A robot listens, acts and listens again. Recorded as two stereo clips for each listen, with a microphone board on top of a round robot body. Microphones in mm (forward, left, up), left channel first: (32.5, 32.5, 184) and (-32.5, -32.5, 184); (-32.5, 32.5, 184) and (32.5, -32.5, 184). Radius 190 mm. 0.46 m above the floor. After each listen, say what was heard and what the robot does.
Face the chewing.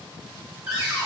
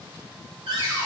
Keep listening.
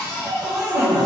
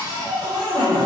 Keep listening.
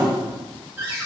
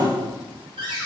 I can't make out chewing to turn to.